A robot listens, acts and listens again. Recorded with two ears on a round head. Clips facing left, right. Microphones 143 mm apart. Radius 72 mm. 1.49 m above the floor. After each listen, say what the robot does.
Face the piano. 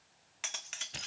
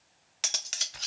Keep listening.
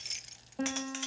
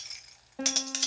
Turn 30° right.
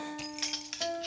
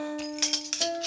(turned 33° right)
Turn 140° right.
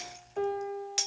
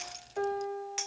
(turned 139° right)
Facing the piano, 2 to 4 m away.